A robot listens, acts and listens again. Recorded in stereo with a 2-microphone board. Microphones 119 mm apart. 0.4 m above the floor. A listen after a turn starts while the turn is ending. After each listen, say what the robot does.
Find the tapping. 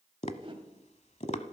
Turn 65° left.
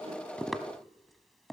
Facing the tapping, 1 to 2 m away.